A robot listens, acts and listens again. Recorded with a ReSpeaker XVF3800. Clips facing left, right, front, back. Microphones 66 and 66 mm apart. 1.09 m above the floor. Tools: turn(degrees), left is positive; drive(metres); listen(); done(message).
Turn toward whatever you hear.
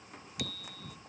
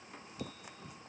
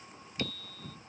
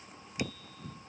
turn(degrees=105)
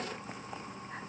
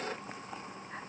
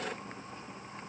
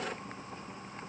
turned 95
turn(degrees=10)
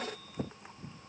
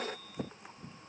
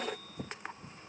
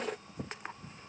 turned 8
listen()
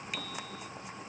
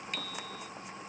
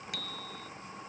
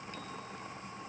done("Facing the bicycle bell.")